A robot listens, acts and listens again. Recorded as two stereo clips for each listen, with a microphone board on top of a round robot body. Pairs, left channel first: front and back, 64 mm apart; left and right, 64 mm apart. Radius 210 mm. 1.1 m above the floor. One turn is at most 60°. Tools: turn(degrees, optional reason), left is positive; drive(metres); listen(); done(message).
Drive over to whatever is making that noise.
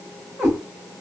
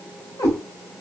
turn(degrees=60, reason="The cat meowing: 90° left.")
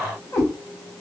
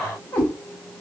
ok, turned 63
turn(degrees=30, reason="The cat meowing is now 30° left.")
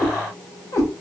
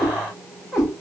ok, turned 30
drive(metres=1.0)
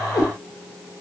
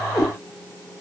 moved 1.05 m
drive(metres=1.0)
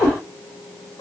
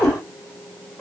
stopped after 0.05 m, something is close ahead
done("Arrived at the cat meowing, straight ahead.")